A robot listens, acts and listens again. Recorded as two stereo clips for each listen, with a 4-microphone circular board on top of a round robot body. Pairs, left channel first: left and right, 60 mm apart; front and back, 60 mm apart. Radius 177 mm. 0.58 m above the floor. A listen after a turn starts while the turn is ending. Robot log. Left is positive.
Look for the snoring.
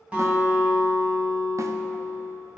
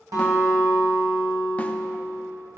cmd idle
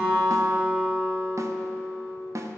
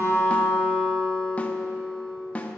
cmd idle
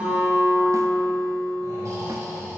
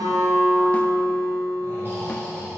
note: The snoring: 125° right.
cmd yaw -125
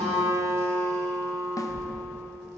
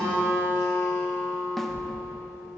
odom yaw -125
note: The snoring is now 25° left.
cmd yaw +25
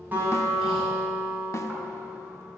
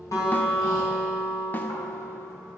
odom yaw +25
cmd idle
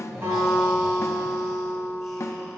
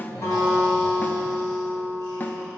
cmd idle
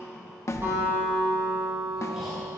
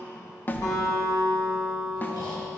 end: Found it: snoring, straight ahead, 2 to 4 m away.